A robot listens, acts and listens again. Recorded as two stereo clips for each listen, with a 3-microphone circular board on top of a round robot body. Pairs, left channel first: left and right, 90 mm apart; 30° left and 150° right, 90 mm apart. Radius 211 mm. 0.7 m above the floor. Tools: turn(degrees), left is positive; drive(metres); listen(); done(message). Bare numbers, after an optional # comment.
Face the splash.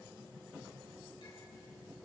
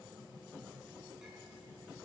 listen()
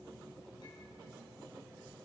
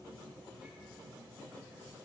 listen()
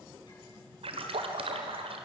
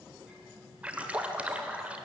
# The splash: 75° right.
turn(-75)
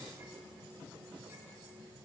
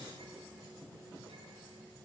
done("I heard a splash from this way, but can't make it out now.")